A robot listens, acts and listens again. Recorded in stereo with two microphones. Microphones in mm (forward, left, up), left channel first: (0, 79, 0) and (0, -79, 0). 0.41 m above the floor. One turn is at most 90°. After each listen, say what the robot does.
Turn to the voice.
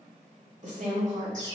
Turn 55° right.
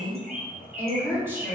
Turn 20° right.
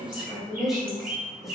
Found it: a woman speaking, straight ahead, 1 to 2 m away.